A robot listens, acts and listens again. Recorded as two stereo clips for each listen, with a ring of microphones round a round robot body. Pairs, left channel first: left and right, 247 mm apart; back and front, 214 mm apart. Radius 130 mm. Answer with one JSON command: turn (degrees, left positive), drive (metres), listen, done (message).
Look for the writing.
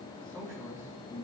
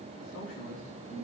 {"listen": true}
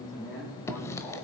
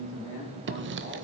{"turn": 10}
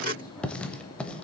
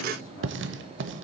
{"done": "Facing the writing, under 1 m away."}